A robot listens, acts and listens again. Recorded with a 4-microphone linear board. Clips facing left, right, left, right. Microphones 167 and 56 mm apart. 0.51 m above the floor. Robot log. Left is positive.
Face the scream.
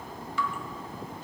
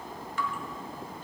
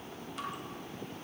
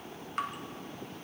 cmd idle
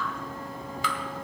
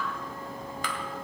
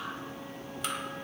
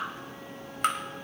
cmd idle
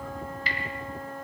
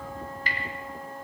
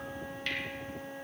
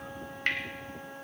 end: I can't make out a scream, only dripping and a flute.